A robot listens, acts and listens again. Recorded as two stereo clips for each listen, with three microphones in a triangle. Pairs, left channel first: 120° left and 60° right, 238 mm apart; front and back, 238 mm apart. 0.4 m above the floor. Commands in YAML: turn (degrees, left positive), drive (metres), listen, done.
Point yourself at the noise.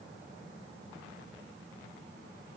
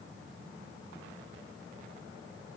listen: true
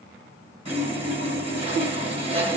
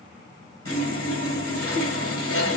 done: "Found it: sawing, straight ahead, 1 to 2 m away."